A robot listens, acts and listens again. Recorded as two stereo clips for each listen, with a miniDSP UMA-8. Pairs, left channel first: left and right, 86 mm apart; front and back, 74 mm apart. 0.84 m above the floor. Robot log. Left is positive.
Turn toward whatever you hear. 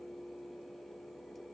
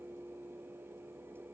cmd idle
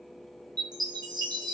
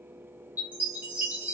note: The chime: 115° right.
cmd yaw -115
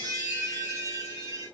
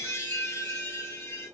note: The chime is now 50° right.
cmd yaw -50
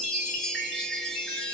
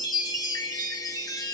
end: Found it: a chime, straight ahead.